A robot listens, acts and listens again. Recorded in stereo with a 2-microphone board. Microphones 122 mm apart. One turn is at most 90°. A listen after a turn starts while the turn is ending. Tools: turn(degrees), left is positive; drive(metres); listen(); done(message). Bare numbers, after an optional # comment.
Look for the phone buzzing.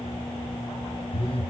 # The phone buzzing: about 50° left or 130° left.
turn(50)
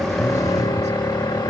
listen()
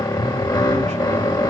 listen()
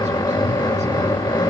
done("I heard a phone buzzing, but can't make it out now. It was about straight ahead or 80° left.")